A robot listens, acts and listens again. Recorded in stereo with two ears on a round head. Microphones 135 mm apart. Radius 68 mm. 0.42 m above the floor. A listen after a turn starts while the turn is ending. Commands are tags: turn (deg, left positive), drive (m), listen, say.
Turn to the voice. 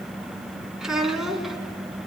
<turn deg="30"/>
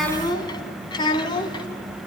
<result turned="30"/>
<turn deg="145"/>
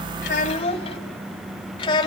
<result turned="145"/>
<turn deg="30"/>
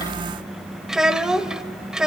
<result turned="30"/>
<say>Facing the child speaking.</say>